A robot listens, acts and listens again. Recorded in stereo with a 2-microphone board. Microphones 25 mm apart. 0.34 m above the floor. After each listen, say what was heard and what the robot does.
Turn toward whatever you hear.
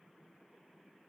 Keep listening.
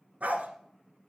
Turn 90° right.
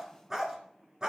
So it is at 30° right. Turn 30° right.
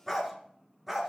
The dog barking is now 10° right. Turn 10° right.
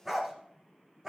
The dog barking is now 15° right. Turn 15° right.
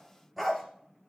Facing the dog barking, 2 to 4 m away.